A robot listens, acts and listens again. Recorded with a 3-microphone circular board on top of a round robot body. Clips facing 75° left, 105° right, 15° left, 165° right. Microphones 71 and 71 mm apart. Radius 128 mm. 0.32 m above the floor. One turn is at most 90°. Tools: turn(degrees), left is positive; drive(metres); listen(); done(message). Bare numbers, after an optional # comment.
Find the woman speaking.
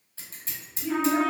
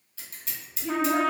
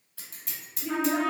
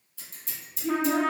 # The woman speaking: 40° right.
turn(-40)
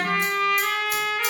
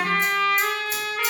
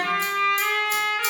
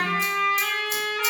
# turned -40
listen()
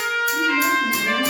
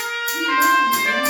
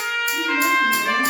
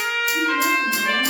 listen()
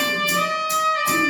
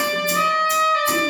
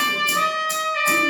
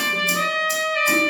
done("I heard a woman speaking from this way, but can't make it out now.")